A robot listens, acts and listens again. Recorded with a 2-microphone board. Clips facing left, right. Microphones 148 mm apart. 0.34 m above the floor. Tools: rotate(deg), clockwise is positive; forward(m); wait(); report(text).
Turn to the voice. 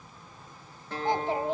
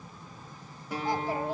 rotate(-20)
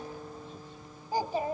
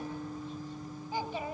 rotate(-135)
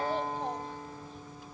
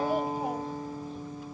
wait()
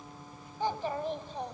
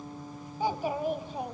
rotate(10)
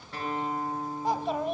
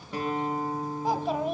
report("Facing the child speaking.")